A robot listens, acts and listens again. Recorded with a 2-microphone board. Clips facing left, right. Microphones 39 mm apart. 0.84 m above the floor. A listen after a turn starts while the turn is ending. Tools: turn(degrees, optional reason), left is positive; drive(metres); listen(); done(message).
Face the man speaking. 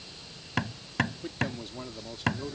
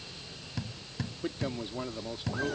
turn(degrees=-15, reason="The man speaking: about 15° right or 165° right.")
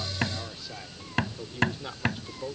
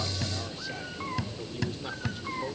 turn(degrees=30)
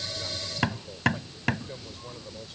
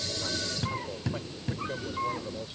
turn(degrees=-20, reason="So it is at 20° right.")
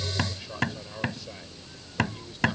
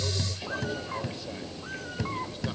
listen()
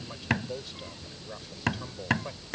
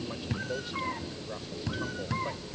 done("Found it: a man speaking, straight ahead.")